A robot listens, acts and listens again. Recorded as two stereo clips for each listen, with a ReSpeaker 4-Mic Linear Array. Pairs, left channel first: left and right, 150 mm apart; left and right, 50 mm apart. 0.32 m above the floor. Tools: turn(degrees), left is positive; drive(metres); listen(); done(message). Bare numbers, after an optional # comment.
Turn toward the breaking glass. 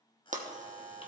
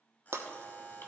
# The breaking glass: about 60° right or 120° right.
turn(-60)
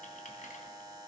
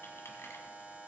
listen()
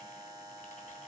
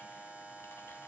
done("I heard breaking glass, but can't make it out now. It was about straight ahead or 60° right.")